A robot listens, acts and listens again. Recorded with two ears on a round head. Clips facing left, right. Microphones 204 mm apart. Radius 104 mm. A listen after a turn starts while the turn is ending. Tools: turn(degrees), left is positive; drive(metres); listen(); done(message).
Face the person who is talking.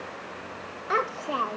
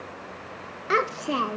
turn(degrees=-30)
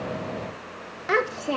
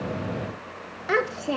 done("Found it: a child speaking, straight ahead.")